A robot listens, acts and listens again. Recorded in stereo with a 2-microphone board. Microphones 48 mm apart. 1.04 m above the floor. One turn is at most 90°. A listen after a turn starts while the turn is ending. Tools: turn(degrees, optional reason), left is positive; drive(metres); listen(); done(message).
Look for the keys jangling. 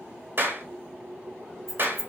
turn(degrees=30)
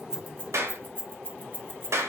turn(degrees=-50, reason="So it is at 50° right.")
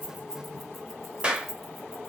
listen()
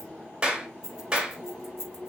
turn(degrees=-10, reason="The keys jangling is now 10° right.")
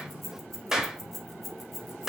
done("Facing the keys jangling.")